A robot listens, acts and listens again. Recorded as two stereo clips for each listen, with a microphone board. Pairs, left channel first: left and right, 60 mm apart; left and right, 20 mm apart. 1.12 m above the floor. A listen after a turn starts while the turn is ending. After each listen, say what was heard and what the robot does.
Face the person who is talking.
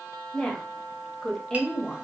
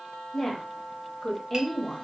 Turn 30° left.
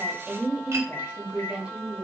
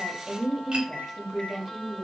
So it is at 20° right. Turn 20° right.
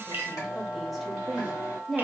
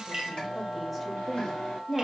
Facing the woman speaking, 1 to 2 m away.